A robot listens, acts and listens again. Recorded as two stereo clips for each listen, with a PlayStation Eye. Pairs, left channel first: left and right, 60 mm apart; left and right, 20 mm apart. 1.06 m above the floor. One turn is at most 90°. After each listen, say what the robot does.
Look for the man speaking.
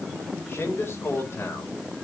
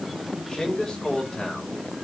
Turn 45° left.
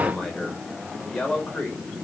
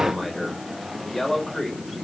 Turn 20° left.
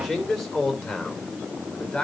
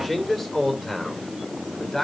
Turn 15° left.
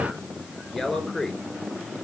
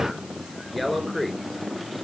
Facing the man speaking.